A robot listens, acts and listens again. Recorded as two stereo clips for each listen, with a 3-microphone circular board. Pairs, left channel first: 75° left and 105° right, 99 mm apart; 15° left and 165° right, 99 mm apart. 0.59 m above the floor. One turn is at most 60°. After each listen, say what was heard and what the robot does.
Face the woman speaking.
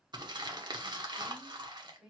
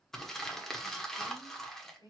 The woman speaking: 25° right. Turn 25° right.
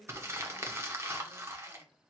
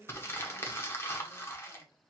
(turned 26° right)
Facing the woman speaking, 2 to 4 m away.